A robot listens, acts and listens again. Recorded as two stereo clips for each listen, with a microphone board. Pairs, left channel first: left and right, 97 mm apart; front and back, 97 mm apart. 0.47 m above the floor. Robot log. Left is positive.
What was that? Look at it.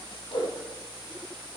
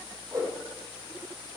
note: The whoosh: 125° left.
cmd yaw +125
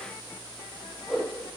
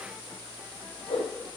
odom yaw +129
end: Facing the whoosh, over 4 m away.